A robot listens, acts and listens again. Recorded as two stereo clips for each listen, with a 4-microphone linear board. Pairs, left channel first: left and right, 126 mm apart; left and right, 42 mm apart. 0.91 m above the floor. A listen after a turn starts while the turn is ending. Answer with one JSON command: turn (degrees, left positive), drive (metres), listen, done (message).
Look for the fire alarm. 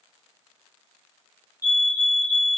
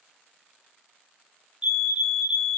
{"turn": -15}
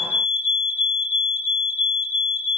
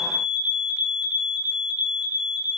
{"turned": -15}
{"turn": -150}
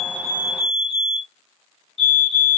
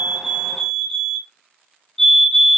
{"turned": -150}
{"done": "Facing the fire alarm."}